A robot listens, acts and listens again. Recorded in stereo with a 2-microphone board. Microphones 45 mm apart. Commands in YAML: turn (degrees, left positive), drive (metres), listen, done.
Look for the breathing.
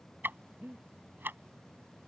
turn: -55
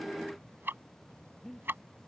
done: "Facing the breathing."